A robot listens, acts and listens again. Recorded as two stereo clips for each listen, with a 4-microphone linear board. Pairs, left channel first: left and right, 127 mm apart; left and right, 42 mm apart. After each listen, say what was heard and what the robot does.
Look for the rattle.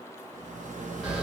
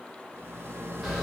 Turn 90° right.
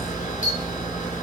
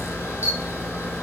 Keep listening.
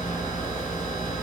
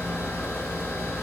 Keep listening.
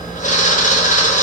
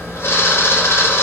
I heard a rattle from this way, but can't make it out now.